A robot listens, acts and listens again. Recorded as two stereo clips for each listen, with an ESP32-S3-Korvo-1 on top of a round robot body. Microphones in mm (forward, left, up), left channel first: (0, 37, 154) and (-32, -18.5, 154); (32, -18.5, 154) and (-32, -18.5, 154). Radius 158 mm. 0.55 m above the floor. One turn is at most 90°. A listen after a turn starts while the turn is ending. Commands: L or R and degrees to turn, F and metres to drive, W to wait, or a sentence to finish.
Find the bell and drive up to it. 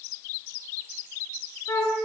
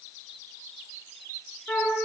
W
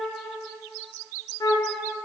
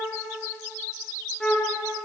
W
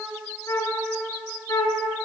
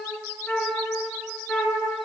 I can't make out a bell to turn to.